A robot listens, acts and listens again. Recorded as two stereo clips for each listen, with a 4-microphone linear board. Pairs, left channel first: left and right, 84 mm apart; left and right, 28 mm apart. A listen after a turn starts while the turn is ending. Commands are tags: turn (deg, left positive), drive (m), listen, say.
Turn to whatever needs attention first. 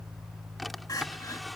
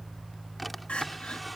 <turn deg="45"/>
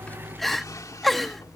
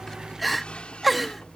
<say>Facing the crying.</say>